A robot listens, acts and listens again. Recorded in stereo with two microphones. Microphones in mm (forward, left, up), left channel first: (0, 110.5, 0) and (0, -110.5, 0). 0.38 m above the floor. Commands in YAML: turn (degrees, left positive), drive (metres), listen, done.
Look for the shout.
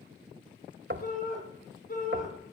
turn: 45
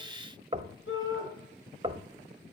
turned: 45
turn: 90
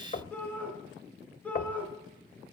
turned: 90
done: "Facing the shout."